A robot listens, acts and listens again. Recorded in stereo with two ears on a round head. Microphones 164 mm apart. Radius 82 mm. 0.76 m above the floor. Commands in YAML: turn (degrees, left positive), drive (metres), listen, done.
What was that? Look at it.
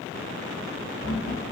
turn: 90
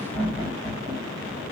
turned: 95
turn: 15
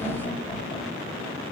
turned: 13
done: "Facing the laughter, 2 to 4 m away."